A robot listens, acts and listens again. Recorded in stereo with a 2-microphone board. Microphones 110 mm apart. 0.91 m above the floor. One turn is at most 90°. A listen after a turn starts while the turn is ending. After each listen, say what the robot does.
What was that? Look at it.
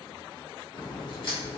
Turn 50° left.
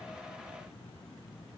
Keep listening.
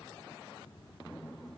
I heard a crack, but can't make it out now. It was about straight ahead or 80° left.